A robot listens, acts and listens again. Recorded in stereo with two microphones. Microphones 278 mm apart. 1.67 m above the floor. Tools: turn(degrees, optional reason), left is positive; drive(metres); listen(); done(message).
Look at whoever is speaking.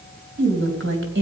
turn(degrees=-45, reason="The woman speaking: about 45° right or 135° right.")
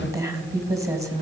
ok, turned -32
turn(degrees=-10, reason="So it is at 10° right.")
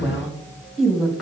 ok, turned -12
done("Facing the woman speaking, 2 to 4 m away.")